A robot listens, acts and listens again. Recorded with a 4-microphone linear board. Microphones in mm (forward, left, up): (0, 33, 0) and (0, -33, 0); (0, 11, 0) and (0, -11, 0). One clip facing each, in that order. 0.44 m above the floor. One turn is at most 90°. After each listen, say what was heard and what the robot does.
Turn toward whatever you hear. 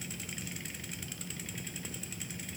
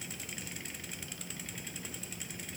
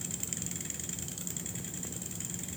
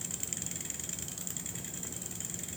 Keep listening.
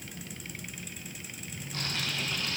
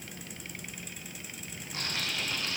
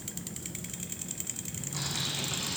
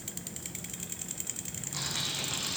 The typing on a keyboard: about 20° right or 160° right. Turn 20° right.
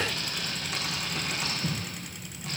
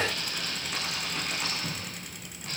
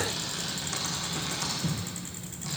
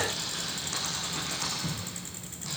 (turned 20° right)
Found it: typing on a keyboard, straight ahead, over 4 m away.